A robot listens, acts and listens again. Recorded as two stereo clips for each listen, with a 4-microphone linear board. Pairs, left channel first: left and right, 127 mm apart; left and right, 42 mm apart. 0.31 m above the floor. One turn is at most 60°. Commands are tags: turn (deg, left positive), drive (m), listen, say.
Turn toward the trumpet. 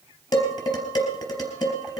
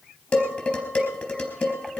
<listen/>
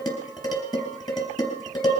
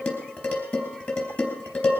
<listen/>
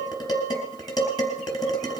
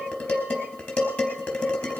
<say>I can't make out a trumpet, only dishes clattering.</say>